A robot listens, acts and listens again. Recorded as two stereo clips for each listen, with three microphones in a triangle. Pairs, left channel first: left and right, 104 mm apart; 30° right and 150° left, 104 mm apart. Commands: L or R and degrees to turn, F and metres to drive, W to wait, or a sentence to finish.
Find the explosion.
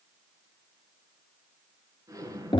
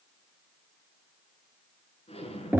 R35
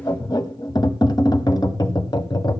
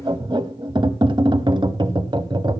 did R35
Facing where the explosion came from. I can't hear it now.